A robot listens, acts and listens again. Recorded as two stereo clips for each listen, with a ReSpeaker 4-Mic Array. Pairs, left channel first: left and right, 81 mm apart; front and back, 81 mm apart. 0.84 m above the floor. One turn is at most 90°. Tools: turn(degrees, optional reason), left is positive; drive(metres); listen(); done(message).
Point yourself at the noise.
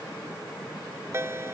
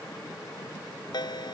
turn(degrees=-30, reason="The ringtone: 30° right.")
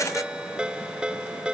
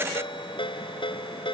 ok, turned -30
turn(degrees=-10, reason="The ringtone is now 10° right.")
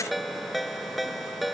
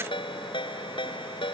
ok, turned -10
done("Found it: a ringtone, straight ahead.")